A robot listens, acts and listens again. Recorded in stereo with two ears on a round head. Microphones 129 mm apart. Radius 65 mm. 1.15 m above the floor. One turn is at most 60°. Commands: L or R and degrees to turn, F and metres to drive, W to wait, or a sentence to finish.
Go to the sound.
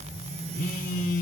L60
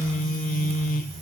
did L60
L60
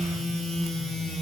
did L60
F1.0
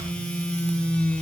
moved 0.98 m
F1.0
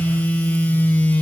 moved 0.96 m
L10
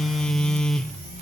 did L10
F1.0
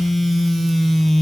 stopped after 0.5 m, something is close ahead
I am next to the phone buzzing.